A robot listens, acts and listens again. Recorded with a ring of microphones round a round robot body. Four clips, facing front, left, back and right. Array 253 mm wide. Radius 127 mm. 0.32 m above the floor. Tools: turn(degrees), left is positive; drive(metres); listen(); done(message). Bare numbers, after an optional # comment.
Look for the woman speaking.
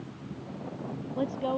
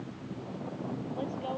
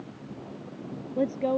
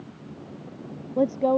# The woman speaking: 110° right.
turn(-110)
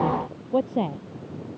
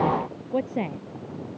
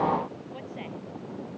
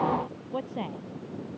# The woman speaking is now 25° left.
turn(25)
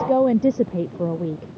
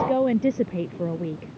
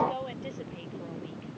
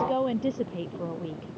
# The woman speaking is now 20° left.
turn(20)
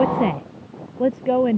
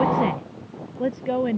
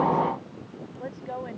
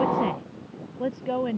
# The woman speaking is now 15° left.
turn(15)
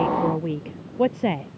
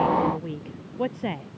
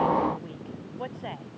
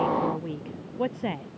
done("Found it: a woman speaking, straight ahead.")